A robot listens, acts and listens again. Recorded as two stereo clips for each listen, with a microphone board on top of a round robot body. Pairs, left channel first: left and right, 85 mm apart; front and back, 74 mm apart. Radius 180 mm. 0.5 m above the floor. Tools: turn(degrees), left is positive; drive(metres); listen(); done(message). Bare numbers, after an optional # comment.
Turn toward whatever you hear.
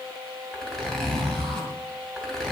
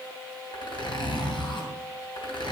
done("Facing the zipper, 2 to 4 m away.")